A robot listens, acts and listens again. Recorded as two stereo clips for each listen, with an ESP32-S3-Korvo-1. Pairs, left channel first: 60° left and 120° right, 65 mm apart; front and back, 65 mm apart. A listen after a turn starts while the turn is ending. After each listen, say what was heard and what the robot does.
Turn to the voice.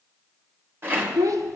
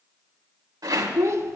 The child speaking: 145° right. Turn 145° right.
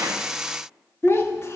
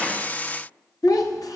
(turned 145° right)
The child speaking is now 15° left. Turn 15° left.
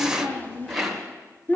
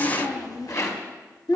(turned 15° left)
Facing the child speaking, 1 to 2 m away.